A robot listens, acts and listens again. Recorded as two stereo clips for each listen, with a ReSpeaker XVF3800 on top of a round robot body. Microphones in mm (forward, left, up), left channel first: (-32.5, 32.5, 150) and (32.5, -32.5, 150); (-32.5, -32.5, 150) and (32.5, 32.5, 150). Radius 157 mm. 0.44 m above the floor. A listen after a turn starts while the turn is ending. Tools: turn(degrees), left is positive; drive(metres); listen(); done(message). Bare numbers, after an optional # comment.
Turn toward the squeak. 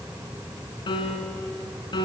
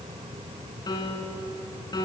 listen()
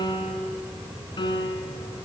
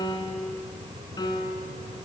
listen()
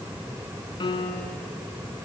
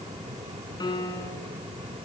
done("I can't make out a squeak, only a piano.")